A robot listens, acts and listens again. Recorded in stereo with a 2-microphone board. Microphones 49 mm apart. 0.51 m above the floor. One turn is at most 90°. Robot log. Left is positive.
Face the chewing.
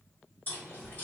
note: The chewing: about 35° left or 145° left.
cmd yaw +35
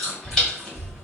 note: So it is at 10° left.
cmd yaw +10
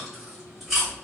end: Facing the chewing.